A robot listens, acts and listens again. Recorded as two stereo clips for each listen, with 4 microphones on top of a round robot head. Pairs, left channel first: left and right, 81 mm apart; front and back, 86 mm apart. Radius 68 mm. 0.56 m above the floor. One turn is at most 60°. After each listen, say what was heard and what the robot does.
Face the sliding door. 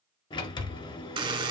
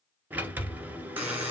The sliding door: 110° left. Turn 60° left.
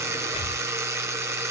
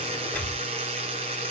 Nothing new. It was at 50° left. Turn 50° left.
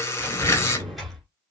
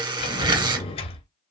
Found it: a sliding door, straight ahead.